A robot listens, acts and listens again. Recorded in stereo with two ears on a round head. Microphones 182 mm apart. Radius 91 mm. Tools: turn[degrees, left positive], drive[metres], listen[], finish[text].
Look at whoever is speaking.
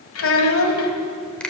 Thought: The child speaking: about 70° left or 110° left.
Action: turn[70]
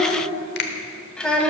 Action: finish[Found it: a child speaking, straight ahead.]